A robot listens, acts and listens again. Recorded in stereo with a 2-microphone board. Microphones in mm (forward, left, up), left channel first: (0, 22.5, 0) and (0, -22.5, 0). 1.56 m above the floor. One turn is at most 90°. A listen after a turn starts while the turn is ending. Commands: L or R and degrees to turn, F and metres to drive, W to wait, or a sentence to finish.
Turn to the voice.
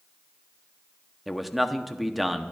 R30
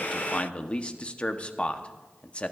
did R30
L25
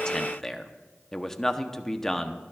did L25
L10
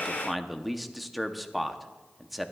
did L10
Facing the man speaking, under 1 m away.